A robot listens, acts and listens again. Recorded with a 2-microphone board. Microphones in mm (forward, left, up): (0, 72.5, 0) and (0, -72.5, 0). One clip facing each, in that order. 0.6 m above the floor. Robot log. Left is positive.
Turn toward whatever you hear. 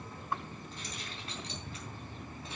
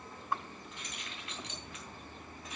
note: The keys jangling: about 30° left or 150° left.
cmd yaw +30
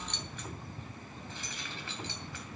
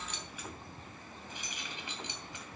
note: So it is at 20° right.
cmd yaw -20
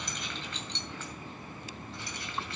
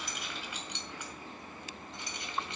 note: The keys jangling is now 20° right.
cmd yaw -20
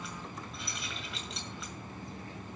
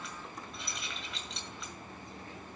end: Facing the keys jangling, 2 to 4 m away.